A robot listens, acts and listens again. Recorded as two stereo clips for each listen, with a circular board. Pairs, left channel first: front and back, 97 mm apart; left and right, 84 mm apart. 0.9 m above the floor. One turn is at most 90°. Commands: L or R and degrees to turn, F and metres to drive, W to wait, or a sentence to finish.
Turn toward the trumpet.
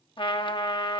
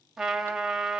R10
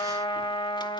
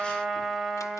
Found it: a trumpet, straight ahead, 2 to 4 m away.